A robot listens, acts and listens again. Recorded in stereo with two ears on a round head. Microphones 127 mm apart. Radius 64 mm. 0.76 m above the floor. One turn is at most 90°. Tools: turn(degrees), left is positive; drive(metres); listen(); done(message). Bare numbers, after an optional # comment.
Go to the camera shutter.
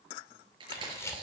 # The camera shutter: about 20° left or 160° left.
turn(20)
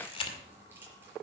# So it is at 135° left.
turn(90)
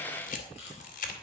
# The camera shutter is now 65° left.
turn(65)
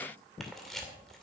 drive(1.0)
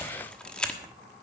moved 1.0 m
# The camera shutter is now 10° left.
turn(10)
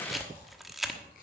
drive(1.0)
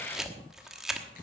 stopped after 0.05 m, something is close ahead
done("I am next to the camera shutter.")